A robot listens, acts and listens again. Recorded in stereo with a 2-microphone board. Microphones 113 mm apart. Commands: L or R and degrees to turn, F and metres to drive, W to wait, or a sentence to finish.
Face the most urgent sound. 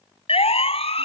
L60
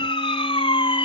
L55
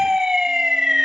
Facing the siren.